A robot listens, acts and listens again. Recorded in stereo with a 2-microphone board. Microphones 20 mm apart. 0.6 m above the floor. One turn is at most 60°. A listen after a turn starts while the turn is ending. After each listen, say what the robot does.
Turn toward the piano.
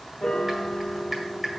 Turn 55° left.
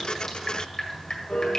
Turn 60° left.
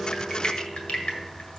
Turn 10° left.
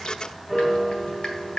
Facing the piano.